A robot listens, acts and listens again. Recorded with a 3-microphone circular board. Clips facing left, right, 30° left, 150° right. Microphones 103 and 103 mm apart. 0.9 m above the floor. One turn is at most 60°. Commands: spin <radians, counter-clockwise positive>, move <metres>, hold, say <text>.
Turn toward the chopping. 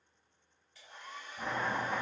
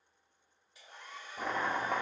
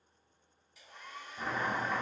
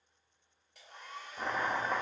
spin -1.05
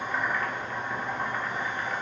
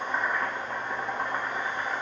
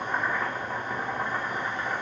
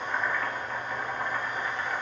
spin -0.61
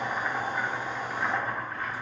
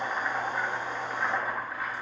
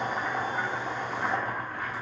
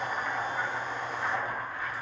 spin -0.17
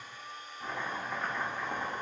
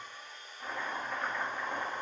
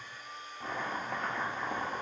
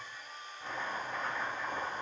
say Found it: chopping, straight ahead.